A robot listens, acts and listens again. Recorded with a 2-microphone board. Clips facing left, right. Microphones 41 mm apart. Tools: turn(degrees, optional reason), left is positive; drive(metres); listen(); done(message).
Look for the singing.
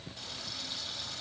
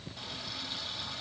listen()
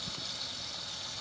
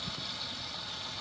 listen()
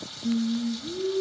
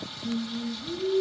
turn(degrees=25, reason="The singing: about 25° left or 155° left.")
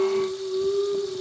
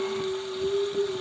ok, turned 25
turn(degrees=135, reason="So it is at 135° left.")
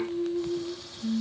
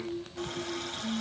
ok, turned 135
turn(degrees=60, reason="The singing is now 60° left.")
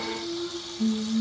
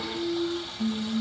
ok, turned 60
turn(degrees=20, reason="The singing is now 20° left.")
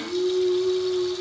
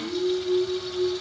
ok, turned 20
done("Facing the singing, over 4 m away.")